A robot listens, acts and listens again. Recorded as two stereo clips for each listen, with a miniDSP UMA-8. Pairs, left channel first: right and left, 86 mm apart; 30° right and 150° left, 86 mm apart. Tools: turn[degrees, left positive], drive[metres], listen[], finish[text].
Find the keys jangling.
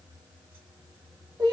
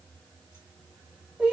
Action: listen[]
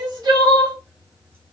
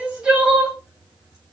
Action: listen[]
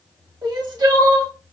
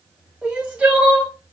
Action: finish[I can't make out keys jangling, only crying.]